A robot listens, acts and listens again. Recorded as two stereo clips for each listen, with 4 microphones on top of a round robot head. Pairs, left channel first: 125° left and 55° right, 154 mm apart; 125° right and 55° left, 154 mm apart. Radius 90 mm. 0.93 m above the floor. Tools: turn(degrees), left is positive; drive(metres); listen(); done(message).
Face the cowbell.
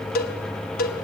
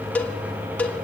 turn(degrees=155)
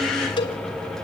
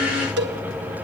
turn(degrees=65)
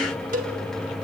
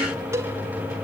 turn(degrees=-20)
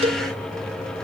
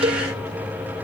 done("Facing the cowbell.")